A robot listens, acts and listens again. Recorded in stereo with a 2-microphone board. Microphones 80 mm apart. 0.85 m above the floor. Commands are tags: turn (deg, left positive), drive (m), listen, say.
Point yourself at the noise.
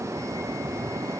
<listen/>
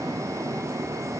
<listen/>
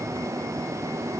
<say>I can't make out anything.</say>